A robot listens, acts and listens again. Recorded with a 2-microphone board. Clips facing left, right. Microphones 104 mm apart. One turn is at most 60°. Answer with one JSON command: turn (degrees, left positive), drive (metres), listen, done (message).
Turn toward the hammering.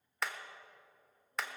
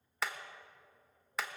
{"turn": 30}
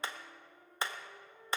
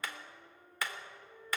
{"turn": 60}
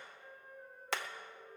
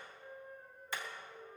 {"turn": 60}
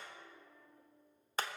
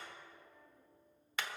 {"turn": 40}
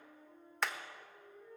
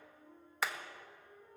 {"done": "Facing the hammering."}